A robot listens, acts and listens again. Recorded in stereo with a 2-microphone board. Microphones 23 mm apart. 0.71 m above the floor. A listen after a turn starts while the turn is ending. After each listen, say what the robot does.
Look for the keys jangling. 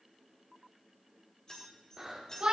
Turn 30° left.
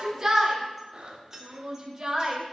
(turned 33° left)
Turn 25° right.
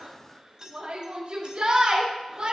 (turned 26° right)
Turn 30° right.
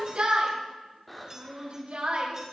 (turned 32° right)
Keep listening.
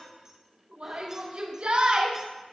Keep listening.
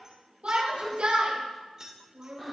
Turn 25° right.
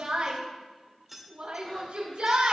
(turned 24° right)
Facing the keys jangling.